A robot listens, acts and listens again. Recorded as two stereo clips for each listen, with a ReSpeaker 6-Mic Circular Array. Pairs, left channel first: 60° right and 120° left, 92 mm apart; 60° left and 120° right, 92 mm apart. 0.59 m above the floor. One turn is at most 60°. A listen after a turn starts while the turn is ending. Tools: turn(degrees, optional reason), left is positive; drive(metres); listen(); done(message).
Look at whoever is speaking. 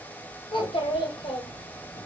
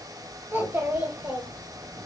turn(degrees=-55, reason="The child speaking: 55° right.")
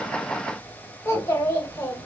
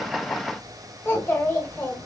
done("Facing the child speaking, 1 to 2 m away.")